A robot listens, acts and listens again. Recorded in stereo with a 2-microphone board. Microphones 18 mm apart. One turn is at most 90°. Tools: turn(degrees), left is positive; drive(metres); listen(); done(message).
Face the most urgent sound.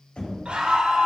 turn(degrees=-90)
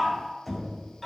done("Found it: a scream, straight ahead.")